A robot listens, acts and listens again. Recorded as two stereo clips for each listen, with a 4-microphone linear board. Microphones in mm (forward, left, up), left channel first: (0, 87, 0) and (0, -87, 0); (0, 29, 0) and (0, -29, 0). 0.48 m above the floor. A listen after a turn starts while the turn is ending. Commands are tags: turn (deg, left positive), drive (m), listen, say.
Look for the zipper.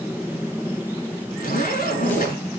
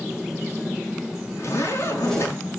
<turn deg="55"/>
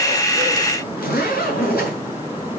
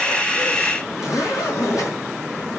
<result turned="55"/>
<turn deg="65"/>
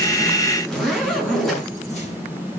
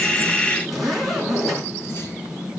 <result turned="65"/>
<say>Found it: a zipper, straight ahead, over 4 m away.</say>